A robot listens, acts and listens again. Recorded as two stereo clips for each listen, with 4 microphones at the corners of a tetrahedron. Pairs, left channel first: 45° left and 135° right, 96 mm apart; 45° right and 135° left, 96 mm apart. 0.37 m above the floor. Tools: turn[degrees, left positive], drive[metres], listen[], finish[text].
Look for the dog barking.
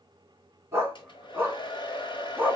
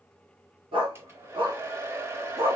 Thought: The dog barking: 150° left.
Action: turn[150]
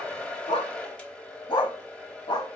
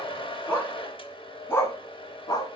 Action: finish[Found it: a dog barking, straight ahead, 1 to 2 m away.]